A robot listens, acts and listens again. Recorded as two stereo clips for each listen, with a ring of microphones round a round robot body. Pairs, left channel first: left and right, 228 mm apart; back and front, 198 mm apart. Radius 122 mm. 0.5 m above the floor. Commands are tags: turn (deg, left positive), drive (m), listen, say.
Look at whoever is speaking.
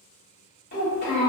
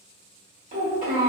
<turn deg="45"/>
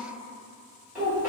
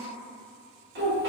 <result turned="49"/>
<say>Found it: a child speaking, straight ahead, 1 to 2 m away.</say>